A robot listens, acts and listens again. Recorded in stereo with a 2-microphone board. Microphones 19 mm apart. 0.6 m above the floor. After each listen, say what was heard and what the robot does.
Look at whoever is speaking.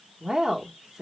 The woman speaking: about 35° right or 145° right. Turn 35° right.
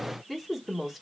Facing the woman speaking, 1 to 2 m away.